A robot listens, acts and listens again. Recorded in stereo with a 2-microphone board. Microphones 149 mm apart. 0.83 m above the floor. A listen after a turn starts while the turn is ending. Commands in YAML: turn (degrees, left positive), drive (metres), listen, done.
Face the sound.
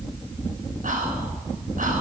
turn: -65
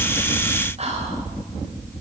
turn: -50
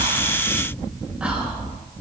listen: true
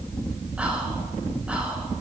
turn: -10
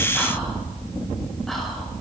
listen: true
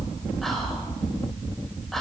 done: "Facing the whispering, over 4 m away."